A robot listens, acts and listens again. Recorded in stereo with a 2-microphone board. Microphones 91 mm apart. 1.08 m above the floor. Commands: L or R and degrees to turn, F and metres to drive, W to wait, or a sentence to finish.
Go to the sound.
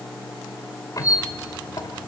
L40
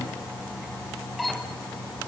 F1.0
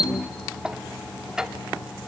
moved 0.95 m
R10
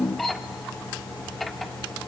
F1.0
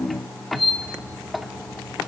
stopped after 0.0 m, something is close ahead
Arrived at the squeak, straight ahead.